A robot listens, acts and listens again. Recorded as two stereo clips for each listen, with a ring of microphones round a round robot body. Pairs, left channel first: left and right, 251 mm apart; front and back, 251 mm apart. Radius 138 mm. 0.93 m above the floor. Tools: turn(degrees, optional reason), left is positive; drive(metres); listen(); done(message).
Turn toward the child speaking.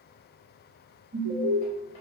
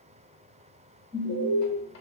listen()
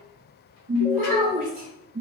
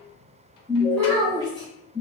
turn(degrees=-75, reason="The child speaking: 75° right.")
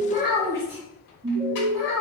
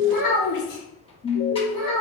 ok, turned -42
turn(degrees=10, reason="The child speaking is now 10° left.")
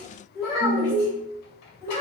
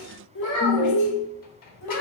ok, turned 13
done("Found it: a child speaking, straight ahead.")